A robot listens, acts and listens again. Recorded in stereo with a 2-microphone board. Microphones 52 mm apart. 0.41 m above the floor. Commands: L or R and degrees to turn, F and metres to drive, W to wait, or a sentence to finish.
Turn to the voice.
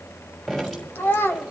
L45
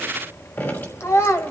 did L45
L80
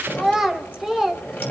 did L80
Found it: a child speaking, straight ahead, 1 to 2 m away.